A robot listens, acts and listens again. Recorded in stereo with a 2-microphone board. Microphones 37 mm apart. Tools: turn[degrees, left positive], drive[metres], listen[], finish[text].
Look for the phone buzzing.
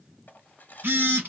Thought: The phone buzzing: about 75° right or 105° right.
Action: turn[-75]
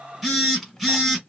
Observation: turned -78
Action: finish[Facing the phone buzzing, 1 to 2 m away.]